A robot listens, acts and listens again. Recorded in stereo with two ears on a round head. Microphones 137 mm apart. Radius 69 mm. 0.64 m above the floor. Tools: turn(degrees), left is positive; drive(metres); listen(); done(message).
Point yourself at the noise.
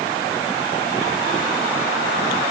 listen()
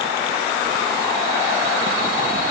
listen()
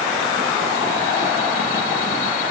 done("I can't make out anything.")